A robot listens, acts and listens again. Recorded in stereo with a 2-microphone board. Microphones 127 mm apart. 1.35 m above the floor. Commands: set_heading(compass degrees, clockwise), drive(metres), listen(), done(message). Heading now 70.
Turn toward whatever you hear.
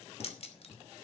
set_heading(20)
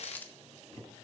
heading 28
set_heading(13)
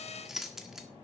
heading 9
done("Facing the keys jangling, 1 to 2 m away.")